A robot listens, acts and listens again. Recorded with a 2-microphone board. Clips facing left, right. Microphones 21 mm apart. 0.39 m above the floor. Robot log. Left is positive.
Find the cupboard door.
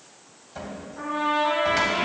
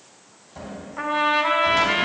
note: The cupboard door: about 40° left or 140° left.
cmd yaw +40
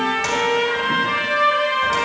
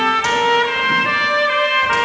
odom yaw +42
cmd idle
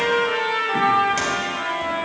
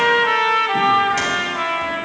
cmd idle
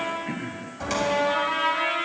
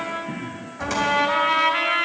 end: Facing the cupboard door.